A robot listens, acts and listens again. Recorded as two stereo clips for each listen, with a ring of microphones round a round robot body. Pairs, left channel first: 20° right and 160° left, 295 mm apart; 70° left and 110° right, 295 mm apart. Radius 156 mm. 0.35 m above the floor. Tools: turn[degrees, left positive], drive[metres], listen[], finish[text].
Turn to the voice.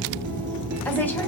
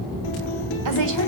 Action: listen[]
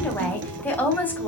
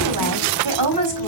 Thought: The woman speaking: 105° right.
Action: turn[-105]
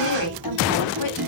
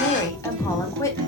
Thought: The woman speaking is now 10° right.
Action: turn[-10]
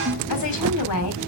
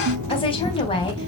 Action: finish[Facing the woman speaking, 2 to 4 m away.]